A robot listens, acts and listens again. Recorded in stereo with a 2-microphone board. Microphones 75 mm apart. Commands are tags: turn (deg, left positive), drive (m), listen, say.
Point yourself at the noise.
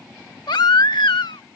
<turn deg="90"/>
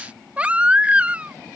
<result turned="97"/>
<turn deg="-15"/>
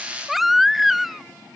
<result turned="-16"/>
<say>Facing the baby crying.</say>